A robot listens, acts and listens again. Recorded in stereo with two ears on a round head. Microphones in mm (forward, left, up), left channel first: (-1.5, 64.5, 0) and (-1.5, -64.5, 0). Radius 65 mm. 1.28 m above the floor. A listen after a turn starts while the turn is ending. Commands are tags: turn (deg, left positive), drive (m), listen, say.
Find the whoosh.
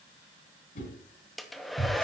<turn deg="60"/>
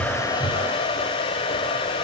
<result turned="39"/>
<listen/>
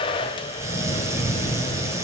<listen/>
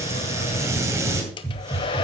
<say>I heard a whoosh, but can't make it out now. It was about 20° left or 80° left.</say>